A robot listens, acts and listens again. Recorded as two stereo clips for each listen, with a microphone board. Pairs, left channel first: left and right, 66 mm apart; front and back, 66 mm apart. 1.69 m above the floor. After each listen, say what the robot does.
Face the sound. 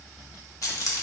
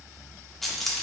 Turn 85° left.
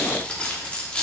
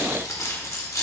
Turn 20° left.
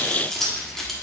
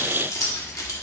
Found it: keys jangling, straight ahead, 1 to 2 m away.